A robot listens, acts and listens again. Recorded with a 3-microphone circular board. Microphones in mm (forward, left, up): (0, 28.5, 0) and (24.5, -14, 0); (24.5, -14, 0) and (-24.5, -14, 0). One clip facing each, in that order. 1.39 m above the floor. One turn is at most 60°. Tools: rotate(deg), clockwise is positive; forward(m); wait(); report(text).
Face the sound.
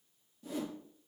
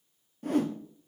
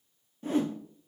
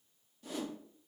rotate(50)
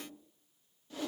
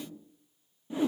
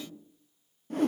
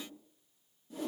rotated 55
report("Found it: a whoosh, straight ahead, under 1 m away.")